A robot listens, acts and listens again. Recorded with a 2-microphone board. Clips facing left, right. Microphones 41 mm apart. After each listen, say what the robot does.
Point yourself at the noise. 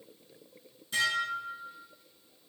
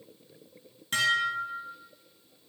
Turn 65° right.
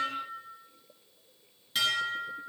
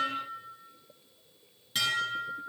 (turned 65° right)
Found it: dishes clattering, straight ahead, 2 to 4 m away.